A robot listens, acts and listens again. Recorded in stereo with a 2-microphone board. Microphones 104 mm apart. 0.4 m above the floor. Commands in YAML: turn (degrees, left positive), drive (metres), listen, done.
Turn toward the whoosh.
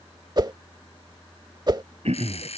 turn: -45
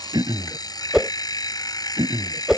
turn: -10
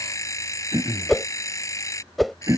done: "Found it: a whoosh, straight ahead."